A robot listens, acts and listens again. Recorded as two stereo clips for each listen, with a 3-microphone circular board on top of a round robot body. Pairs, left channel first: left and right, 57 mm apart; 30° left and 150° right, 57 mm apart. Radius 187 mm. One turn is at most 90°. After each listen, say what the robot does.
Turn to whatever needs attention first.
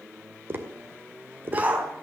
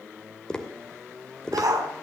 Turn 90° right.
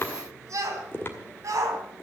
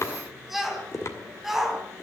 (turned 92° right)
Turn 65° right.
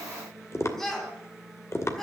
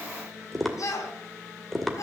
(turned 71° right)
Found it: a shout, straight ahead.